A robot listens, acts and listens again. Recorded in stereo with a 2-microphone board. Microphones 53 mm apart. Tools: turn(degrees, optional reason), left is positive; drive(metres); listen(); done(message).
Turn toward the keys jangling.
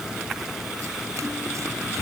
listen()
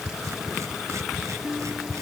listen()
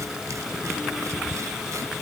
done("I can't make out keys jangling, only a guitar.")